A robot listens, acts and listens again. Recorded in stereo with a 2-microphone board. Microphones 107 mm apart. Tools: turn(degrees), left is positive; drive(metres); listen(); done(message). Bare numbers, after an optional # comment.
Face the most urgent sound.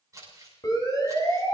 # The siren: about 40° left or 140° left.
turn(40)
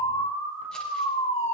# So it is at 100° left.
turn(100)
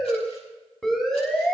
done("Facing the siren, over 4 m away.")